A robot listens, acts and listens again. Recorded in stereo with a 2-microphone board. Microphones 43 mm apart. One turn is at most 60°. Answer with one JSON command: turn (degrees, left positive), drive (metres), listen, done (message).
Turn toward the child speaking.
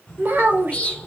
{"turn": -50}
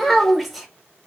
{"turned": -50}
{"done": "Found it: a child speaking, straight ahead, under 1 m away."}